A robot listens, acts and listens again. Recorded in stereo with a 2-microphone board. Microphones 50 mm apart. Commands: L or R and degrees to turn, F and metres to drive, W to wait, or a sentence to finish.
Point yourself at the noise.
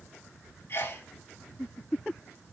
L45
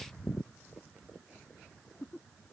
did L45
W
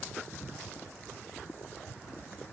I heard a sneeze, but can't make it out now. It was about straight ahead or 90° left.